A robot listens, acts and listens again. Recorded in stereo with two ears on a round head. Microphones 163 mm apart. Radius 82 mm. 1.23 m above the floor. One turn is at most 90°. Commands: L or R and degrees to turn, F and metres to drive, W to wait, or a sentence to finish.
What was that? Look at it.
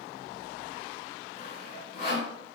L50
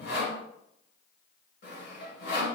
L75
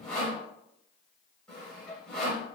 Found it: sawing, straight ahead, 1 to 2 m away.